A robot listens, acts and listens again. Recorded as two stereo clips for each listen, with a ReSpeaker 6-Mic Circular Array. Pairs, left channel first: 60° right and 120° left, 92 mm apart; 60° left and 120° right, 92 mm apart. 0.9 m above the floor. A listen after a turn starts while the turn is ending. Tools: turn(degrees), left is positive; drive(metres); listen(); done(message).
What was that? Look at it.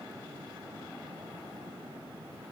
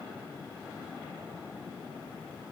listen()
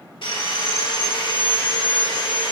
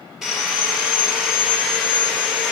turn(degrees=-35)
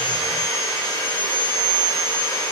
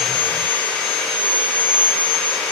turn(degrees=-10)
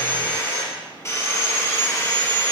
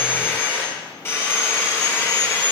done("Facing the sawing.")